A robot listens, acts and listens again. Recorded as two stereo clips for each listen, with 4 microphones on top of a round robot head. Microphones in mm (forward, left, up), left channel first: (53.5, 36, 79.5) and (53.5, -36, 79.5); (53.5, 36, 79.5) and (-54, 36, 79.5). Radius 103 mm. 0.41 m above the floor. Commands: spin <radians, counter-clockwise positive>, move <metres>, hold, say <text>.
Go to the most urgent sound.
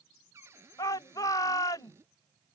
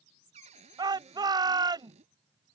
spin 2.27
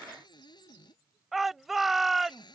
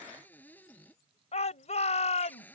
move 1.0
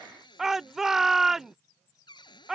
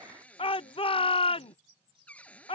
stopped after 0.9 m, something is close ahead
say I am next to the shout.